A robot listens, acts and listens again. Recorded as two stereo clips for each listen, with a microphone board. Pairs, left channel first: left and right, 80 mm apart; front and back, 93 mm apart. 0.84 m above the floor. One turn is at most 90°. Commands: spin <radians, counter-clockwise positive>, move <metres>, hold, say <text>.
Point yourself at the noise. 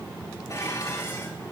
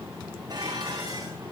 spin 1.57
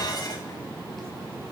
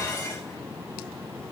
spin 0.87
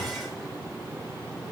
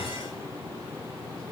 hold
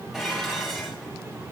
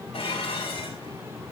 say Found it: dishes clattering, straight ahead.